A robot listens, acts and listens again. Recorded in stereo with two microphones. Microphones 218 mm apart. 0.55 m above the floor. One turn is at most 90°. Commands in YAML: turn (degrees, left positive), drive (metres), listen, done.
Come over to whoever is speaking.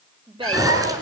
turn: -20
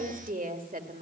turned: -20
turn: -90
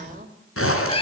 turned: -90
turn: -45
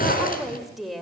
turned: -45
drive: 1.0
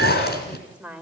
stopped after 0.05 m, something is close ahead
done: "Something is in my way. I am facing the woman speaking but have not reached it."